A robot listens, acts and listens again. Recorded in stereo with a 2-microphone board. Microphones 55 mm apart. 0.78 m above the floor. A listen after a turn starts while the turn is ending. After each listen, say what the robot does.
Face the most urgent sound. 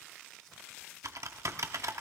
Keep listening.
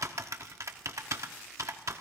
Keep listening.
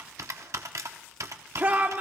Turn 35° right.
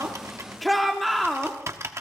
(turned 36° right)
Facing the shout.